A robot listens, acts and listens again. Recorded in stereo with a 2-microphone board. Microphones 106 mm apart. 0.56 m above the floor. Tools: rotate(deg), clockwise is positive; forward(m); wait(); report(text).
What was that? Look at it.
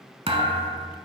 rotate(60)
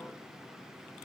wait()
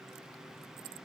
report("I heard a thud, but can't make it out now. It was about straight ahead or 60° right.")